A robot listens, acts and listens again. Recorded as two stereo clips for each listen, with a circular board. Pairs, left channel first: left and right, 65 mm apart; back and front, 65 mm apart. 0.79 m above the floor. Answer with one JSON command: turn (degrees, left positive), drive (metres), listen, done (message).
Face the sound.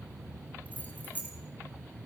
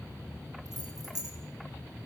{"turn": 25}
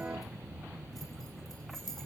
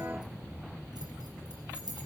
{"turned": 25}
{"done": "Facing the keys jangling."}